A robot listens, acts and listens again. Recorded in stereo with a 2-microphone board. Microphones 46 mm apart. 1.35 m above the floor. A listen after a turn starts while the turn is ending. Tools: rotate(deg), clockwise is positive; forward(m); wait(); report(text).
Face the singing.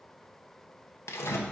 wait()
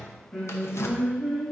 rotate(-30)
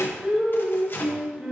rotate(20)
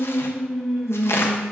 report("Facing the singing, 2 to 4 m away.")